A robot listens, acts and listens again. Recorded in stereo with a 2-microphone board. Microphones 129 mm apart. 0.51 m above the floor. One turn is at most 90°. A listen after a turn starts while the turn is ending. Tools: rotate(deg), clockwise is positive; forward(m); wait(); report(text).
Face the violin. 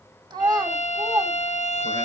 rotate(-60)
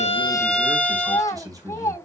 rotate(-10)
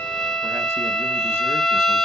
report("Facing the violin.")